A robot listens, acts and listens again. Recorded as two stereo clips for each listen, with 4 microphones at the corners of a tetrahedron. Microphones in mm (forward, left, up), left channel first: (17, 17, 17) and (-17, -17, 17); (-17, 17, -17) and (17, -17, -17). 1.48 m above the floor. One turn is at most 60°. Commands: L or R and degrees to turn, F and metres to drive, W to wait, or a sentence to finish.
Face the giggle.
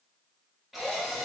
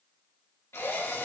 W
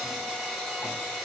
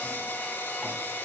W
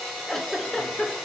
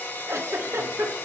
R35
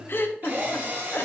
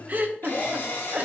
Facing the giggle, 1 to 2 m away.